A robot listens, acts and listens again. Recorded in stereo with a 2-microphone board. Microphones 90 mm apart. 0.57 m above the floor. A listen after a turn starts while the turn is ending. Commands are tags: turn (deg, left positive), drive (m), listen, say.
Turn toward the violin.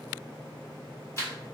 <listen/>
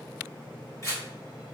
<listen/>
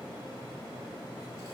<say>I can't make out a violin to turn to.</say>